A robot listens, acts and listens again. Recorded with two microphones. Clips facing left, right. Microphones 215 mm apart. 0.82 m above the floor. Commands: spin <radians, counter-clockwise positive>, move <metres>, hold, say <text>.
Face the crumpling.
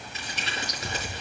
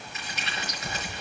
spin 0.52
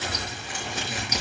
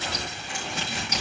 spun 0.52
say Facing the crumpling.